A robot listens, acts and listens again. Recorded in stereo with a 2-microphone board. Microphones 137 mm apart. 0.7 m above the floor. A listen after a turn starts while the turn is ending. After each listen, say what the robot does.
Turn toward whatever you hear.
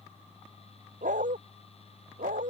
Turn 70° right.
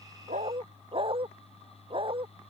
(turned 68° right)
Turn 40° right.
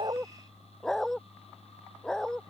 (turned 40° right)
Facing the dog barking.